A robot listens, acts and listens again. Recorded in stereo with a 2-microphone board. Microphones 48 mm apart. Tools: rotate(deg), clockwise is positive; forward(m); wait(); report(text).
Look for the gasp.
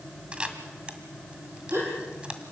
rotate(65)
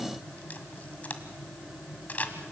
wait()
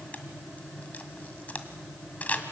report("I heard a gasp, but can't make it out now. It was about straight ahead or 50° right.")